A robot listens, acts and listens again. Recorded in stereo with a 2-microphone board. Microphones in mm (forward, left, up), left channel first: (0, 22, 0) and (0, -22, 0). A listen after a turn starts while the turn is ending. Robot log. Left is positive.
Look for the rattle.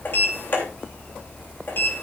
cmd idle
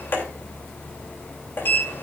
cmd idle
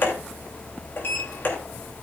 end: I can't make out a rattle, only a sliding door.